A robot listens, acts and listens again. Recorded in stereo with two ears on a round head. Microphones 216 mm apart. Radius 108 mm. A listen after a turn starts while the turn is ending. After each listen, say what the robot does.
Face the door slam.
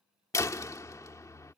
Turn 30° left.
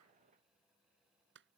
Keep listening.
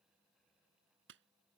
I heard a door slam, but can't make it out now. It was about 15° right or 135° left.